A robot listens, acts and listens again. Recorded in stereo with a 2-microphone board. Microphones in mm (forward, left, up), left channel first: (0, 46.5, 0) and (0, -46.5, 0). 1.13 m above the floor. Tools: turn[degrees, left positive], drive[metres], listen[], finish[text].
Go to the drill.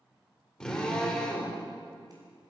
Action: turn[30]
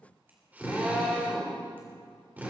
Thought: So it is at 20° right.
Action: turn[-20]
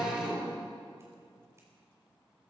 Thought: The drill is now 10° right.
Action: turn[-10]
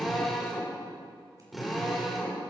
Action: drive[1.0]
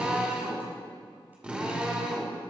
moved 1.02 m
Thought: The drill is now 15° right.
Action: turn[-15]
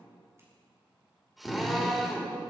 Action: drive[1.0]
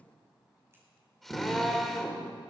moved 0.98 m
Action: drive[1.0]
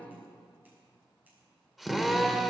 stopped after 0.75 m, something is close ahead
Action: finish[Arrived at the drill, straight ahead.]